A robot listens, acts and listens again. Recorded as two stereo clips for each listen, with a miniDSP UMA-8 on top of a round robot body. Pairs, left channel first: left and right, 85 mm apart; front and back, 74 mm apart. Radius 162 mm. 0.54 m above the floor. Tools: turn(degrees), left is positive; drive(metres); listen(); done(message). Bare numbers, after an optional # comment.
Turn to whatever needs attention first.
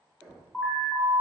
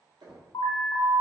# The alarm: 20° left.
turn(20)
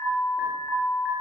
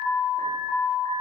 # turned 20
done("Facing the alarm, 1 to 2 m away.")